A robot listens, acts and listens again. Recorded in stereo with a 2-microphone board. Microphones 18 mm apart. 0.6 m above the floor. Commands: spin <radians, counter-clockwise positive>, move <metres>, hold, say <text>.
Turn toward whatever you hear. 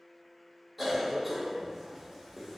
spin 0.52
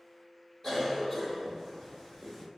spin 2.62
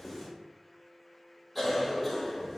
say Found it: a cough, straight ahead, 1 to 2 m away.